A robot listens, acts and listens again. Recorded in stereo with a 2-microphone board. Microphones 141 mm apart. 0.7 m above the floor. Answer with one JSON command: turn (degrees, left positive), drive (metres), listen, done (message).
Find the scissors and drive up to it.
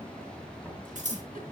{"turn": -60}
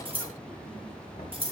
{"turn": -45}
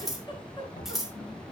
{"drive": 1.0}
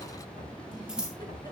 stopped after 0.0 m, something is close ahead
{"done": "Blocked. The scissors is further on, straight ahead."}